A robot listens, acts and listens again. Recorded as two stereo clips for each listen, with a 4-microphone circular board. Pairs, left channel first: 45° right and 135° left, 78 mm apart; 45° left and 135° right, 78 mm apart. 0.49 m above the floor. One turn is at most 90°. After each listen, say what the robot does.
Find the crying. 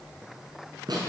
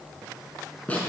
Keep listening.
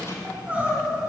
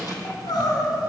Turn 65° left.
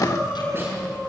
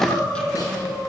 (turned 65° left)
Turn 25° left.
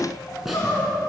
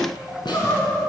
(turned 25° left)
Found it: crying, straight ahead.